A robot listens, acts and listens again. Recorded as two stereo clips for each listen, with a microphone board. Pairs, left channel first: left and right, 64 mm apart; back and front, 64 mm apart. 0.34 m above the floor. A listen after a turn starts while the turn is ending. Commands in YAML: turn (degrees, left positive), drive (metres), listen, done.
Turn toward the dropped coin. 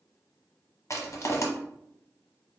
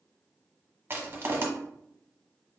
listen: true
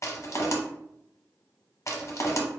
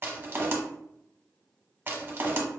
listen: true
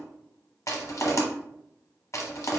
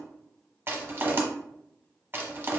done: "I can't make out a dropped coin to turn to."